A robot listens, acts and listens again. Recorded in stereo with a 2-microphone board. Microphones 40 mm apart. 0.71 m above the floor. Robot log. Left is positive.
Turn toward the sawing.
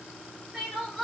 cmd idle
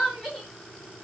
cmd idle
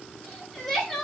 end: I can't make out sawing to turn to.